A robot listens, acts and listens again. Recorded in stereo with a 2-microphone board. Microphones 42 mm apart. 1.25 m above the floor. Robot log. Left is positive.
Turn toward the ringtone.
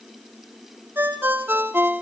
note: The ringtone: about 55° right or 125° right.
cmd yaw -55
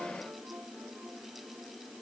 cmd idle
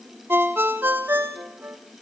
note: So it is at 65° right.
cmd yaw -65
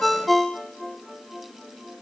end: Facing the ringtone.